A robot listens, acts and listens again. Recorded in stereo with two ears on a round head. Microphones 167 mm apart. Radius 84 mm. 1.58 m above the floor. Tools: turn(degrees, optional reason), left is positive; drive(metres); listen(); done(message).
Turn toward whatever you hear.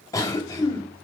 turn(degrees=20, reason="The cough: about 20° left or 160° left.")
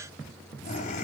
turn(degrees=140, reason="So it is at 140° left.")
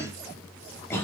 turn(degrees=15, reason="The cough is now 15° left.")
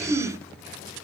done("Found it: a cough, straight ahead, 2 to 4 m away.")